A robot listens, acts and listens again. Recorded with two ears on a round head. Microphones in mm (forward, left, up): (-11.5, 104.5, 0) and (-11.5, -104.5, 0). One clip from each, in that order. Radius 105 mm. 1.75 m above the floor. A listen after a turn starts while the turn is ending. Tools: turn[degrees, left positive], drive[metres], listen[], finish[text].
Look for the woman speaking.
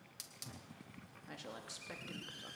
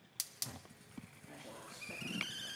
Thought: The woman speaking: about 70° left or 110° left.
Action: turn[70]
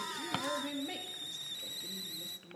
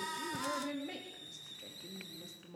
Action: finish[Facing the woman speaking, 2 to 4 m away.]